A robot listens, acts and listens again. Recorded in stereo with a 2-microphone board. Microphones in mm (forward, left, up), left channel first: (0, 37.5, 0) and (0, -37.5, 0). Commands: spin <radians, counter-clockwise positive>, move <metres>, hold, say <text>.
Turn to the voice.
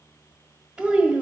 spin -0.52
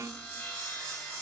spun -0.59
hold
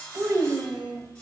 spin -2.36
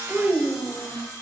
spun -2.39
say Found it: a child speaking, straight ahead, 1 to 2 m away.